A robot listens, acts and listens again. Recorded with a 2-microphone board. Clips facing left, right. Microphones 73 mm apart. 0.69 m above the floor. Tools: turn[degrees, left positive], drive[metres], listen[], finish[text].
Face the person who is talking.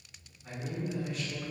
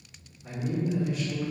Action: turn[-30]
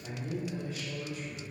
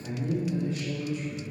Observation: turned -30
Thought: So it is at 145° right.
Action: turn[-145]
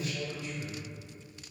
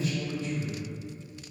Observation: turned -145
Thought: The man speaking is now 25° right.
Action: turn[-25]
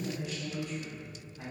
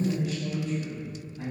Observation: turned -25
Thought: The man speaking is now 10° left.
Action: turn[10]
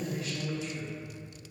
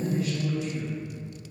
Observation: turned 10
Action: finish[Facing the man speaking.]